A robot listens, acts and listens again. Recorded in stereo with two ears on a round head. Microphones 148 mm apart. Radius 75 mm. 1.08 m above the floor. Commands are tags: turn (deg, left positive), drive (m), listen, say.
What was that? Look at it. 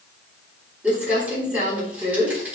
<turn deg="-30"/>
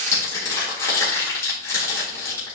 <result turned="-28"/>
<turn deg="20"/>
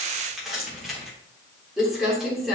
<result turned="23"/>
<say>Facing the crumpling.</say>